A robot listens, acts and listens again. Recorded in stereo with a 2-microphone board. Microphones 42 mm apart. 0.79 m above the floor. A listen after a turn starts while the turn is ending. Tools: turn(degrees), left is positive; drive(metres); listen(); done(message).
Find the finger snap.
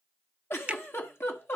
turn(degrees=-25)
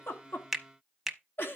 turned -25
done("Found it: a finger snap, straight ahead, under 1 m away.")